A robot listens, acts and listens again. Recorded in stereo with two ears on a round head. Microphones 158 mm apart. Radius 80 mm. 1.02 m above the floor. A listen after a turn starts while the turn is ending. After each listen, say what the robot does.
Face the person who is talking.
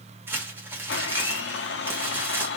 Keep listening.
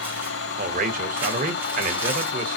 Turn 50° right.
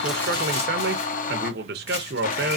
Turn 75° right.
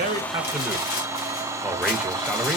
Keep listening.
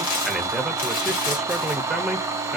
Facing the man speaking.